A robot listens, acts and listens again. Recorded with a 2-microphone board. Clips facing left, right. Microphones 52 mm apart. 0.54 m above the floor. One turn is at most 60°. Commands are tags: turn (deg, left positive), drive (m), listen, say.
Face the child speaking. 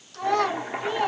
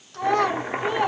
<turn deg="-20"/>
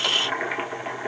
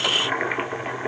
<listen/>
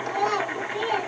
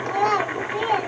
<turn deg="-60"/>
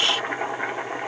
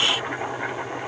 <turn deg="-60"/>
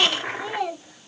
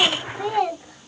<turn deg="-50"/>
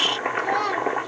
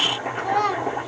<say>Found it: a child speaking, straight ahead, 2 to 4 m away.</say>